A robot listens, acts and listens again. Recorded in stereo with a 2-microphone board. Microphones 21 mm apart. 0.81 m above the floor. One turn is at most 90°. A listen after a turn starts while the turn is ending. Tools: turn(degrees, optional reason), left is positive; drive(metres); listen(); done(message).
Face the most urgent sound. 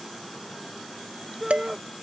turn(degrees=-30)
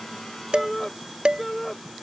turn(degrees=15, reason="So it is at 15° left.")
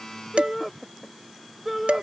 done("Found it: a shout, straight ahead.")